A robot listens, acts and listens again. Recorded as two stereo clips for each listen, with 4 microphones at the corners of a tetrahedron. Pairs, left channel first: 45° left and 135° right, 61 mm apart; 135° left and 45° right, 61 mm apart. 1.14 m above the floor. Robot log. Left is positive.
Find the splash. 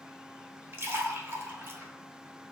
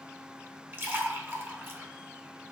note: The splash: 95° right.
cmd yaw -95
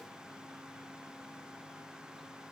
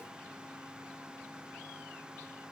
end: I heard a splash from this way, but can't make it out now.